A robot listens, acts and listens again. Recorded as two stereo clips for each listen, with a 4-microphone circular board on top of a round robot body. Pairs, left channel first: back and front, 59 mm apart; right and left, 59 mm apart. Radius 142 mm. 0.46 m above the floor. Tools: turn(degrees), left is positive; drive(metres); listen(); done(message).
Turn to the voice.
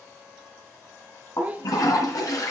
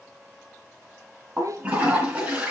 turn(degrees=65)
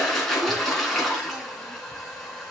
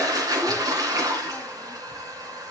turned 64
listen()
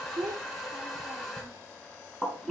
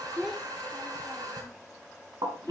done("Facing the child speaking, 1 to 2 m away.")